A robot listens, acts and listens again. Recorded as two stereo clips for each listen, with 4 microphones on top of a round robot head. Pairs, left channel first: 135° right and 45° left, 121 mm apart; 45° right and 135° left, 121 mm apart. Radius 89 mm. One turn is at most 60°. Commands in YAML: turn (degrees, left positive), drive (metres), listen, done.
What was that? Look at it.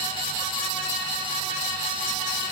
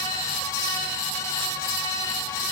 listen: true
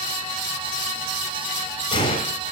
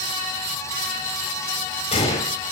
turn: -60
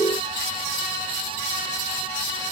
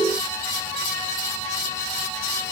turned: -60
turn: -25
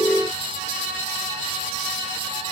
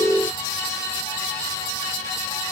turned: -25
done: "I heard a gunshot from this way, but can't make it out now."